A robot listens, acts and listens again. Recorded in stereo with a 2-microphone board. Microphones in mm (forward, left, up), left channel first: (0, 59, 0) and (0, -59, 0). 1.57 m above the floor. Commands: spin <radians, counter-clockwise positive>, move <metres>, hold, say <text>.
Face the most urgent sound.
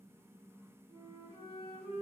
hold
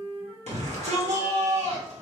spin -1.57
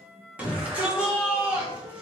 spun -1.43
spin -0.17
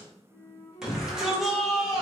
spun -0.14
say Facing the shout, 1 to 2 m away.